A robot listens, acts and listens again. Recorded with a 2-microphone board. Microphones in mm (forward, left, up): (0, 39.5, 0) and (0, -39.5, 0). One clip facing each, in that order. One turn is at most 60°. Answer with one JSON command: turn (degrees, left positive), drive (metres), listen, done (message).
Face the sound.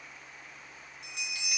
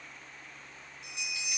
{"turn": 60}
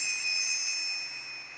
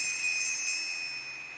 {"done": "Found it: a bell, straight ahead, 1 to 2 m away."}